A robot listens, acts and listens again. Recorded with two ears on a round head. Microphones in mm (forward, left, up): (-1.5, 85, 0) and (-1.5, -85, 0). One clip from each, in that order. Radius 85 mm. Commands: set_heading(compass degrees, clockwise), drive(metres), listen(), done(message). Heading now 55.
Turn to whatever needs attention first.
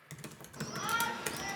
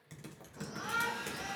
set_heading(325)
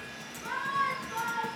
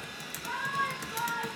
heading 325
done("Facing the shout, 2 to 4 m away.")